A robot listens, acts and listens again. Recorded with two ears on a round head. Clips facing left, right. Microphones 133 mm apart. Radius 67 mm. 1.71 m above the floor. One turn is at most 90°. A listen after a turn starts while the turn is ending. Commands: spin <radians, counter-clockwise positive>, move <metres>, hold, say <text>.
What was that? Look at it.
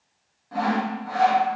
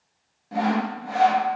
spin -0.44
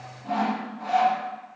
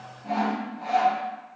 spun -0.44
say Facing the sawing, under 1 m away.